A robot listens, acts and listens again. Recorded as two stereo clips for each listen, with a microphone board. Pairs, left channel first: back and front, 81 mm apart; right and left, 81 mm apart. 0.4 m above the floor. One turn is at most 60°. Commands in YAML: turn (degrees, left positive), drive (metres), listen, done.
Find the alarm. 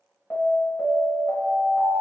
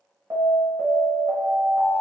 turn: 60
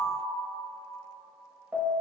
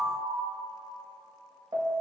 turn: 60
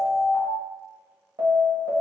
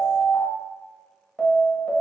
done: "Found it: an alarm, straight ahead."